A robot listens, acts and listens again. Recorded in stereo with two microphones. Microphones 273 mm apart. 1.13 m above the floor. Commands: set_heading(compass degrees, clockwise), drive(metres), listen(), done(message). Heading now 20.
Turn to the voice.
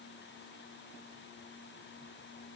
listen()
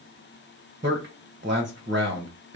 set_heading(60)
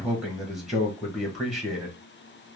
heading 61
done("Facing the man speaking.")